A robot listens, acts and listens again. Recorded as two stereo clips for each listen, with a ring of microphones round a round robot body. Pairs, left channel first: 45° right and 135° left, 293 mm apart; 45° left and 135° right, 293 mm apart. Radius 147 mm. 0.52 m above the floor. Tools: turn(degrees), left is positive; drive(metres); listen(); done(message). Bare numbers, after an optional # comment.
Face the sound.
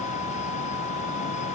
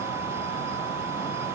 listen()
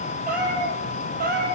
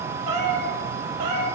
# The cat meowing: 165° right.
turn(-165)
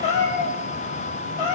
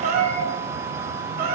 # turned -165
# The cat meowing is now 75° right.
turn(-75)
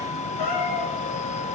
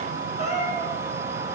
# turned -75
# The cat meowing is now 25° right.
turn(-25)
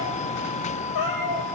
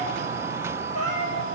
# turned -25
done("Found it: a cat meowing, straight ahead.")